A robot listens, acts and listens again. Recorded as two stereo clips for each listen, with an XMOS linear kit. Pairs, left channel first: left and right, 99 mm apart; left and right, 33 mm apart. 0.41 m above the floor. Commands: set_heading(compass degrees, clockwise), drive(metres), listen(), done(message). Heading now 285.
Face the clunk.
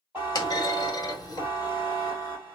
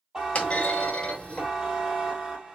set_heading(245)
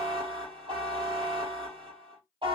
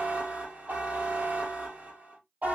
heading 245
listen()
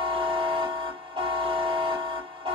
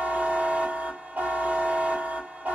done("I heard a clunk, but can't make it out now. It was about straight ahead or 100° left.")